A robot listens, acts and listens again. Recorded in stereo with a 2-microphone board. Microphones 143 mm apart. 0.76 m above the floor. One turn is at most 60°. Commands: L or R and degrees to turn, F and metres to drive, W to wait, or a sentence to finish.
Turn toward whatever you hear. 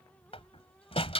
L40
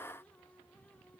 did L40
W
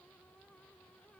I heard a door slam, but can't make it out now. It was about straight ahead or 100° left.